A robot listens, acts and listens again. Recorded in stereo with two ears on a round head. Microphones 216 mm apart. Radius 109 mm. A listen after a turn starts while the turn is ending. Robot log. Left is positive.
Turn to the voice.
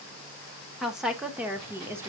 cmd yaw -30
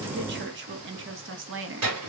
note: So it is at 120° right.
cmd yaw -120
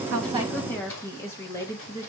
note: The woman speaking is now 15° left.
cmd yaw +15
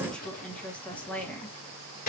end: Found it: a woman speaking, straight ahead.